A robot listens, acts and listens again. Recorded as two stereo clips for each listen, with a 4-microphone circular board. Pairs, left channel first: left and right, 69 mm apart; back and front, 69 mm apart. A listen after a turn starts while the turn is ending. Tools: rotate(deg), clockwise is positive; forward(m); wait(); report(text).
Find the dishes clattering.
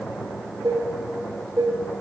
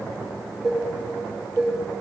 rotate(95)
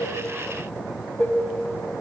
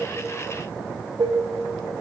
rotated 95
report("Found it: dishes clattering, straight ahead.")